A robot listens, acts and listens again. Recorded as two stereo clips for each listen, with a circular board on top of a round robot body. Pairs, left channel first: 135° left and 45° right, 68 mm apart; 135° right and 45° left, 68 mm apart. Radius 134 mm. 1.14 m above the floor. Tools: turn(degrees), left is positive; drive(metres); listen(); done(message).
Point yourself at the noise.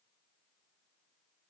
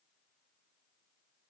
listen()
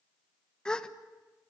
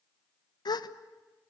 turn(degrees=-145)
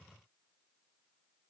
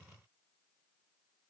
done("Facing where the gasp came from. I can't hear it now.")